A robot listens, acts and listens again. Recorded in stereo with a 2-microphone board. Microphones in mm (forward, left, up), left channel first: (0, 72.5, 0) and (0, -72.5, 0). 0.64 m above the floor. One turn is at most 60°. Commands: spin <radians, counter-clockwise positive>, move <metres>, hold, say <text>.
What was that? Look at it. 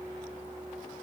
hold
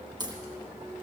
spin -0.52
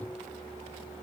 hold
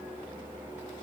say I heard a crack, but can't make it out now. It was about straight ahead or 120° right.